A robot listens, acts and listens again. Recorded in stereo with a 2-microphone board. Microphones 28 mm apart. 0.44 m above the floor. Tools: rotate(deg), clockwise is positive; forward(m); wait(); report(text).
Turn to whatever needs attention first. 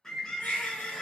rotate(-90)
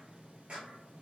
wait()
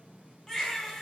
rotate(-10)
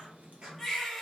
report("Found it: a baby crying, straight ahead.")